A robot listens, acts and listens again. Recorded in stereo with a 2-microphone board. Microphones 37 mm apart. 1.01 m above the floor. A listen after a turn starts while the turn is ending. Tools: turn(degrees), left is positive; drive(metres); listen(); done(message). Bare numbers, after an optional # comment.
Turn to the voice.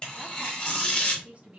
# The woman speaking: about 35° right or 145° right.
turn(-35)
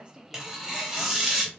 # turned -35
listen()
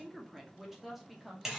done("Facing the woman speaking, under 1 m away.")